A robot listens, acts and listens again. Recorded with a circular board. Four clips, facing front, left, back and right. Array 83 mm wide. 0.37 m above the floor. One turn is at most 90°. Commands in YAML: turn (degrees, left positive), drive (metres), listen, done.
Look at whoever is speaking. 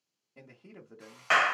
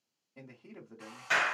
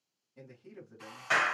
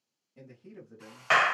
turn: 30
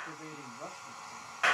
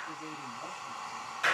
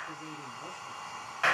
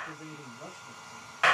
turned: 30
listen: true
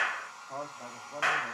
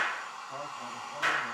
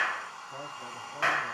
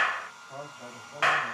turn: -10
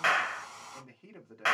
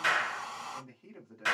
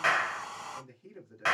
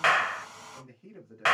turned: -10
done: "Facing the man speaking."